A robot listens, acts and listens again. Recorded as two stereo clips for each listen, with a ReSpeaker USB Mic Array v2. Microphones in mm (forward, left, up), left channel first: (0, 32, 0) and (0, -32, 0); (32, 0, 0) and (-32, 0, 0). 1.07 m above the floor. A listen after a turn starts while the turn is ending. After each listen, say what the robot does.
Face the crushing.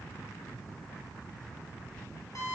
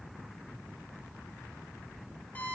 Keep listening.
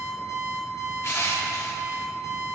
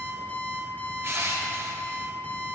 Turn 135° left.
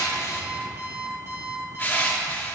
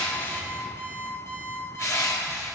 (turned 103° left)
Turn 30° left.
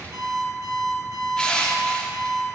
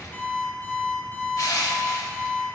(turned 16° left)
Turn 15° left.
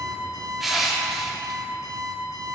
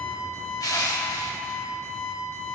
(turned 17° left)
Facing the crushing, 1 to 2 m away.